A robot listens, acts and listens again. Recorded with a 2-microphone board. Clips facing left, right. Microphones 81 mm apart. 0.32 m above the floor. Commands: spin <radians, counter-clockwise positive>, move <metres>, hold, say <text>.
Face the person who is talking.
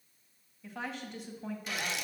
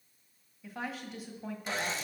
spin -0.52
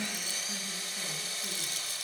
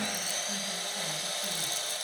hold
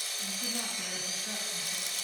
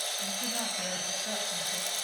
hold
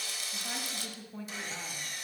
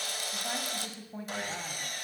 spin -2.44
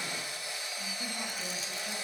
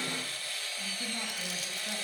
hold
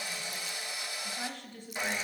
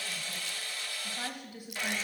spin -0.17
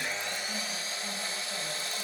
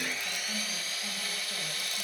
hold
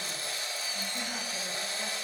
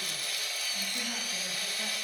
hold
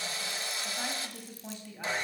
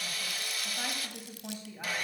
say Found it: a woman speaking, straight ahead, 1 to 2 m away.